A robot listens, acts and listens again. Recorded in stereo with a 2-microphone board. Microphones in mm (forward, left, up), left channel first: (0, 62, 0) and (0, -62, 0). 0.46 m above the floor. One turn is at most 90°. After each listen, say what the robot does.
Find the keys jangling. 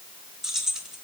Turn 30° right.
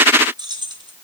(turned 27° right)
Turn 90° right.
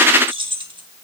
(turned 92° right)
Turn 40° right.
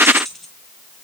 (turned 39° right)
Facing the keys jangling, 2 to 4 m away.